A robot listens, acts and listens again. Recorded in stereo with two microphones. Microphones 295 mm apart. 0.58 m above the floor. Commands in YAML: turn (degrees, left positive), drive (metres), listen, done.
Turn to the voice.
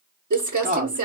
turn: -25
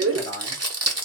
turn: -125
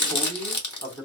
done: "Facing the man speaking, 1 to 2 m away."